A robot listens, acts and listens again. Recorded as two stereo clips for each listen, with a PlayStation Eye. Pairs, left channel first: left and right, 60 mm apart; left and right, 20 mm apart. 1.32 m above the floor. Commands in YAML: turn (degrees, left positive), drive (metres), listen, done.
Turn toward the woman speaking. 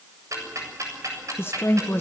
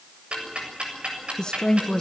turn: 40
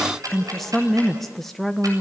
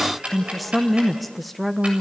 done: "Found it: a woman speaking, straight ahead, 1 to 2 m away."